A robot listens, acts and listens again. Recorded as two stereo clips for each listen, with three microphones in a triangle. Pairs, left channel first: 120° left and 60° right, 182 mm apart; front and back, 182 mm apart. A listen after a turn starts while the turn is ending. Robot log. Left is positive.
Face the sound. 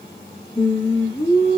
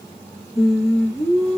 note: The singing: 55° left.
cmd yaw +55
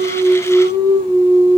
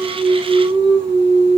end: Facing the singing, under 1 m away.